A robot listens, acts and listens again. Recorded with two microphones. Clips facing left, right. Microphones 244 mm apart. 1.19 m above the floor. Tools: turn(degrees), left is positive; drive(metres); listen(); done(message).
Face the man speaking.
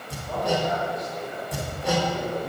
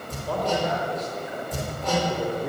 turn(degrees=-90)
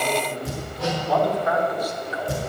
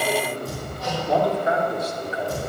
turn(degrees=-30)
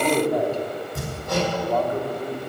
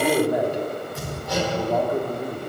turn(degrees=-10)
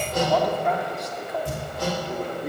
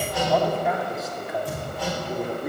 done("Found it: a man speaking, straight ahead.")